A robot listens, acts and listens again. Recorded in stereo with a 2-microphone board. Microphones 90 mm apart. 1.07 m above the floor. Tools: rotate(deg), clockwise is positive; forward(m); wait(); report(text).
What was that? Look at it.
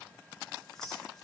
rotate(-30)
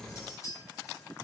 rotate(-140)
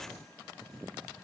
wait()
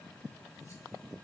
wait()
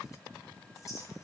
rotate(-35)
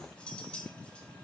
rotate(-10)
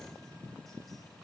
wait()
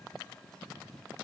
wait()
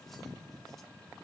report("I heard a clink from this way, but can't make it out now.")